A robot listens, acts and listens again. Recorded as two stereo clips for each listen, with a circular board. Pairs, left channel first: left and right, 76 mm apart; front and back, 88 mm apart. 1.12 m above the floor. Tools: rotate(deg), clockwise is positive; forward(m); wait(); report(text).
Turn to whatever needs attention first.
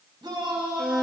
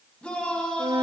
rotate(75)
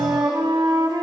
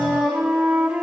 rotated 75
wait()
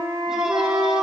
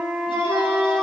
wait()
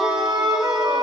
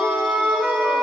report("I heard a shout from this way, but can't make it out now.")